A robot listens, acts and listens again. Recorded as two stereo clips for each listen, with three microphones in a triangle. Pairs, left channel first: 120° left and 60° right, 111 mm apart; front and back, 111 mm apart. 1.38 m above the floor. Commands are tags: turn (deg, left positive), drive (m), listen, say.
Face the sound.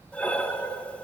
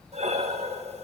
<turn deg="-160"/>
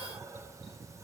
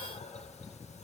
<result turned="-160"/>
<listen/>
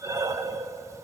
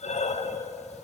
<say>Facing the breathing, under 1 m away.</say>